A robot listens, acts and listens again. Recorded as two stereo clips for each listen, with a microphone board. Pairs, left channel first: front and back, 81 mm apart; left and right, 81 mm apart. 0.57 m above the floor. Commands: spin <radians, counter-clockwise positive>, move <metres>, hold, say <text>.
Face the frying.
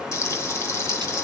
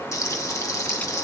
spin 0.87
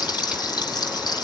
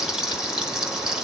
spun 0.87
spin -0.17
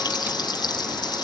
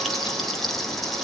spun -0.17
say Found it: frying, straight ahead, 2 to 4 m away.